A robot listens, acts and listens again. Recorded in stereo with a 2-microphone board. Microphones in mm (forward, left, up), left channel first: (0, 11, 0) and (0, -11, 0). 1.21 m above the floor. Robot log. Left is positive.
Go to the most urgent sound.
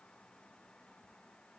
cmd idle
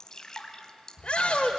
note: The shout: about 55° left or 125° left.
cmd yaw +55
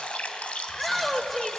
cmd fwd 1.0
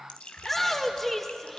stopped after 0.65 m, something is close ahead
end: Blocked. The shout is further on, straight ahead.